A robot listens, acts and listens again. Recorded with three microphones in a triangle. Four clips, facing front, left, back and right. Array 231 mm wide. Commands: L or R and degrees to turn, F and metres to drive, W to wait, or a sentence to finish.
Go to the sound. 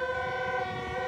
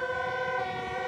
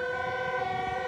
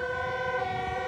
W
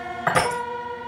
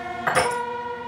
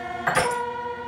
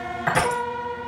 F1.0
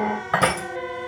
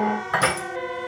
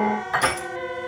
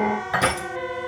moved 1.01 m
F1.0
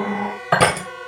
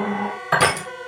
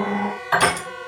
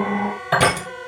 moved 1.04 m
R10
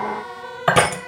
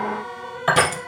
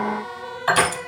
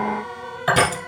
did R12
F1.0
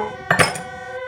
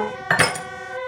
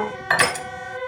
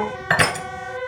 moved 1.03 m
F1.0
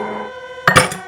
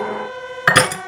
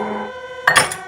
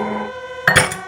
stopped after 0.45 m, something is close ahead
Arrived at the crushing, straight ahead.